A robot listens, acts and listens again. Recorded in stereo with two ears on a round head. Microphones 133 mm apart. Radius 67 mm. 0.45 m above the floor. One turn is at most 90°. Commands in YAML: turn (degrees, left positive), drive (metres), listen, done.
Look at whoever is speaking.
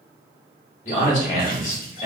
turn: 50
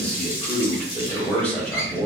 turn: 10
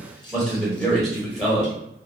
done: "Found it: a man speaking, straight ahead."